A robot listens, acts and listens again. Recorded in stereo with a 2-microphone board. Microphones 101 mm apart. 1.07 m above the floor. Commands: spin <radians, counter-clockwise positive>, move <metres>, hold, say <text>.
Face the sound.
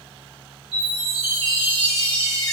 spin -1.05
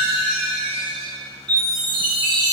spin -0.79
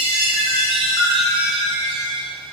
say Found it: a chime, straight ahead, 1 to 2 m away.